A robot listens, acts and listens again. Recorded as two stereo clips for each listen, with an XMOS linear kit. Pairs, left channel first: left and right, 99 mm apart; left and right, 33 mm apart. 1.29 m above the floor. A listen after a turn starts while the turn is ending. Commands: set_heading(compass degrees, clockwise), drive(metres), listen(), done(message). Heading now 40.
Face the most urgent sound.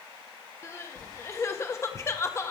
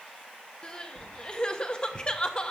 set_heading(10)
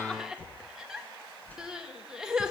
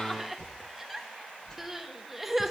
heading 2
done("Facing the crying, 1 to 2 m away.")